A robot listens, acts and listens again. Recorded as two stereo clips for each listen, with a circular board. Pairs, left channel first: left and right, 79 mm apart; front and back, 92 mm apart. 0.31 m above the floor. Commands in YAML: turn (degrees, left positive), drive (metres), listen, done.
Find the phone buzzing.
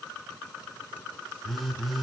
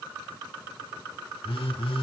done: "Found it: a phone buzzing, straight ahead, 1 to 2 m away."